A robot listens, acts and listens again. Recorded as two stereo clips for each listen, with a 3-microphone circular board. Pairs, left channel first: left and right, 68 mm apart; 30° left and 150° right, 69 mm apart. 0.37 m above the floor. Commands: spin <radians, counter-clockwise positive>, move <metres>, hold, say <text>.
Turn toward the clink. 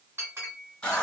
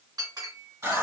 spin -2.53
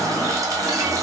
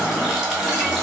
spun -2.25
spin -0.26
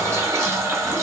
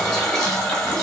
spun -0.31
hold
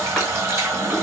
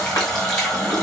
say Facing where the clink came from. I can't hear it now.